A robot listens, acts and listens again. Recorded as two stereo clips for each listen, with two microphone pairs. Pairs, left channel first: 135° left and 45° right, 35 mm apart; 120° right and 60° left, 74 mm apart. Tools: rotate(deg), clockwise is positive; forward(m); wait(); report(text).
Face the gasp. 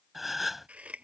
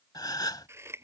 rotate(130)
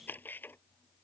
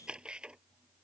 report("I heard a gasp from this way, but can't make it out now.")